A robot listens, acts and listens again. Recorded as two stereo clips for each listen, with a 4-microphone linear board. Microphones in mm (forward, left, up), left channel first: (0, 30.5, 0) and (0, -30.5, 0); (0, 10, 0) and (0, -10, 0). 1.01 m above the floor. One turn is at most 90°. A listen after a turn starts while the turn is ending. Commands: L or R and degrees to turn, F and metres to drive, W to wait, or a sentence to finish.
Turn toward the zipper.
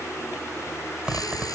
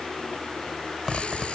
R15
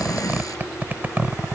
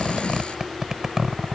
R90
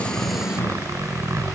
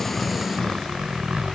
R65
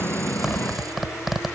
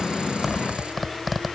Facing the zipper.